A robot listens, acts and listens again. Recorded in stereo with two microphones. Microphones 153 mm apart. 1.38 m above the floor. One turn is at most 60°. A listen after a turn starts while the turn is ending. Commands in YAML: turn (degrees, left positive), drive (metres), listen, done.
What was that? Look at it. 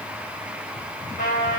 turn: 60
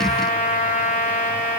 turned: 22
turn: 50
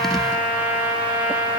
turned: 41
turn: 10
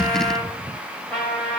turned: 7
done: "Facing the trumpet."